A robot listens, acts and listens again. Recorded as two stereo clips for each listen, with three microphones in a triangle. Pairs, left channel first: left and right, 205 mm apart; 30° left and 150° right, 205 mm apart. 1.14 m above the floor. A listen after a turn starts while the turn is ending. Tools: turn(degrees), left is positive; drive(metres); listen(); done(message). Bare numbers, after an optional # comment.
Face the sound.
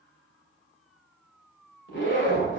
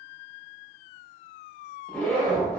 # The zipper: 115° left.
turn(115)
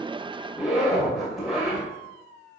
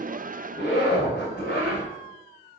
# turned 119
done("Facing the zipper, 2 to 4 m away.")